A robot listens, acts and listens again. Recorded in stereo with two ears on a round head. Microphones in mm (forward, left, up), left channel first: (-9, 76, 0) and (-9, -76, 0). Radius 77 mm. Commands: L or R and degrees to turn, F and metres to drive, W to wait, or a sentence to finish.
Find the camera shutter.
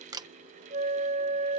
R20
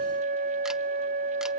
W
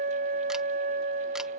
W
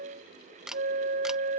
Facing the camera shutter.